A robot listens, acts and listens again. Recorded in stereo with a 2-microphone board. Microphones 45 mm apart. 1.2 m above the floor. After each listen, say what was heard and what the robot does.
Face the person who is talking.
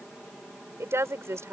The woman speaking: about 75° right or 105° right. Turn 75° right.
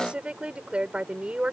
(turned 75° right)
So it is at 25° right. Turn 25° right.
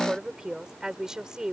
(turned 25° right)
The woman speaking is now 15° right. Turn 15° right.
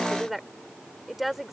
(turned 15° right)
Found it: a woman speaking, straight ahead.